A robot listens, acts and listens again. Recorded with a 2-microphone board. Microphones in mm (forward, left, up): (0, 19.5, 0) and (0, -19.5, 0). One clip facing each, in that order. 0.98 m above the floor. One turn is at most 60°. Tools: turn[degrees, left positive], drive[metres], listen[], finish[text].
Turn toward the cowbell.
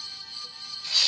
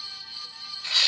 Action: listen[]
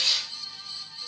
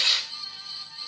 Action: listen[]
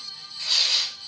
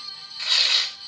Action: finish[I can't make out a cowbell to turn to.]